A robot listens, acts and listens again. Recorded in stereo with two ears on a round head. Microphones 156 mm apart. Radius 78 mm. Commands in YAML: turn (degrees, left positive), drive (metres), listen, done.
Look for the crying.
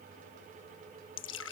listen: true
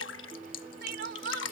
turn: -65
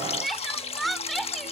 done: "Facing the crying."